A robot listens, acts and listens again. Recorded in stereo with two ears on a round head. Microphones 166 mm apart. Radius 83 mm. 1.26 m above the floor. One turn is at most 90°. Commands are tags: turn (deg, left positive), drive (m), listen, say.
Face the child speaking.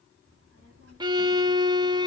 <turn deg="-75"/>
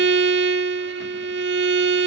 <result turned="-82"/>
<listen/>
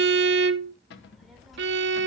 <say>Found it: a child speaking, straight ahead.</say>